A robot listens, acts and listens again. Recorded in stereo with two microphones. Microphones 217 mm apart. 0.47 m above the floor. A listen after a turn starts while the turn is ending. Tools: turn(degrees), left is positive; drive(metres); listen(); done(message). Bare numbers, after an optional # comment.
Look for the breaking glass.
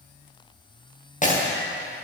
# The breaking glass: about 40° left or 140° left.
turn(40)
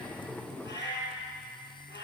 listen()
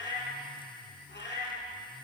done("I heard breaking glass, but can't make it out now. It was about straight ahead or 100° left.")